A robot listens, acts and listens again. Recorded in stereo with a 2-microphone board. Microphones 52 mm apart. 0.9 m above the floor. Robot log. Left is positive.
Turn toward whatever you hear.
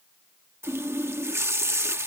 note: The running tap: about 65° right or 115° right.
cmd yaw -65
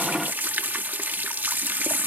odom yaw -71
note: So it is at 40° right.
cmd yaw -40
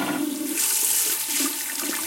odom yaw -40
end: Facing the running tap.